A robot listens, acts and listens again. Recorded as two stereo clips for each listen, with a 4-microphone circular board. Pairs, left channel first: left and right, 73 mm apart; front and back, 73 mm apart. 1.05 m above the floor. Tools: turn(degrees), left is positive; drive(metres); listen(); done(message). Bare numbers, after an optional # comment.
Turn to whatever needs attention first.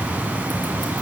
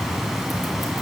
listen()
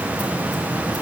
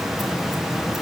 listen()
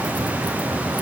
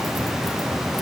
done("I can't make out anything urgent.")